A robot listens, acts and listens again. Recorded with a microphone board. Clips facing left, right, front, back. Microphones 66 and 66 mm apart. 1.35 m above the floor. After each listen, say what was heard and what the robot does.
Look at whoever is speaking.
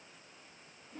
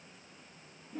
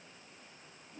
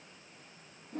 Keep listening.
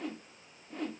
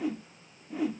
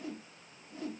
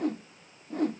Keep listening.
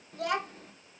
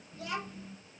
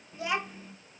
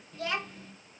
The child speaking: 80° left. Turn 80° left.
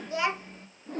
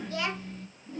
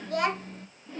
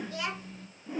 The child speaking is now 30° left. Turn 30° left.
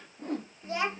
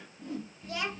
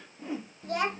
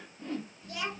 The child speaking is now 30° left. Turn 30° left.
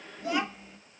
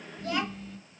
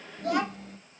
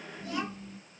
The child speaking is now 10° left. Turn 10° left.
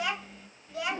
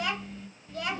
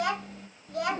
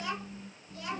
Facing the child speaking.